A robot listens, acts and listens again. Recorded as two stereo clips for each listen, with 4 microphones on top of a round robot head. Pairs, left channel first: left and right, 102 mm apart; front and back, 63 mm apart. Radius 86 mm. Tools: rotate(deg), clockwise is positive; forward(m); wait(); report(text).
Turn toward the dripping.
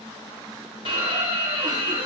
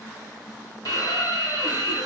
rotate(-140)
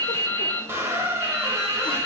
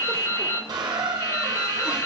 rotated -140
rotate(-25)
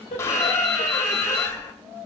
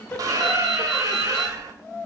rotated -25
rotate(20)
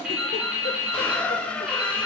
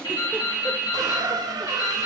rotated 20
rotate(10)
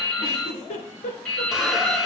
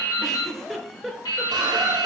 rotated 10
report("Found it: dripping, straight ahead.")